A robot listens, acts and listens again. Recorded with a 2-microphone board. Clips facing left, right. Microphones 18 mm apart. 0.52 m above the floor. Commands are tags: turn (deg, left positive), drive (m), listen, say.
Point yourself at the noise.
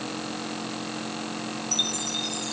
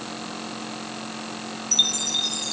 <turn deg="-25"/>
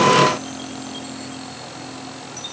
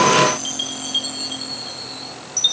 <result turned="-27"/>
<turn deg="-130"/>
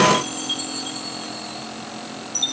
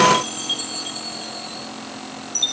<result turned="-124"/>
<say>Found it: a chime, straight ahead.</say>